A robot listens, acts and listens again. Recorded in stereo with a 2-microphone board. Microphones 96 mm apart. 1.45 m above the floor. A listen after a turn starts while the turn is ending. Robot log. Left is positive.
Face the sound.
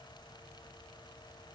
cmd idle
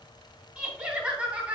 note: The laughter: about 15° right or 165° right.
cmd yaw -15
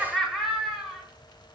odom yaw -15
cmd yaw -30
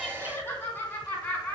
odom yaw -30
note: So it is at 20° left.
cmd yaw +20
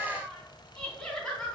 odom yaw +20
end: Facing the laughter, over 4 m away.